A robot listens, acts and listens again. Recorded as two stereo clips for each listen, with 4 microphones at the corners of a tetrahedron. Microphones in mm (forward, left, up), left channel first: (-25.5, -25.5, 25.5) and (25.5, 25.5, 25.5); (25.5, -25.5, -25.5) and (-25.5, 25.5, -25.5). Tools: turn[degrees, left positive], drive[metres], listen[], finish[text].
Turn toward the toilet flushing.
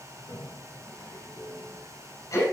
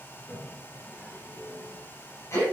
Thought: The toilet flushing: 125° right.
Action: turn[-125]
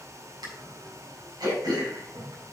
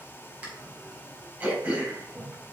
Thought: The toilet flushing is now 35° left.
Action: turn[35]
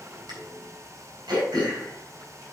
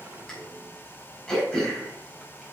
Action: finish[Found it: a toilet flushing, straight ahead, 2 to 4 m away.]